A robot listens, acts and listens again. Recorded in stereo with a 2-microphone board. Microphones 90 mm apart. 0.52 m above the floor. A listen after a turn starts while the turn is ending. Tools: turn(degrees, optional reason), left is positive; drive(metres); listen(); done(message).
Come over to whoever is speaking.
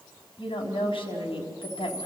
turn(degrees=90)
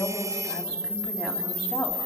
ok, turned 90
listen()
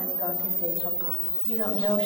listen()
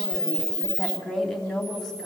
drive(metres=1.0)
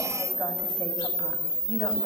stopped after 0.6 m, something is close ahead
listen()
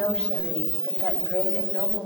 turn(degrees=10, reason="The woman speaking is now 10° left.")
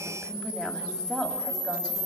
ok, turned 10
done("Something is in my way. I am facing the woman speaking but have not reached it.")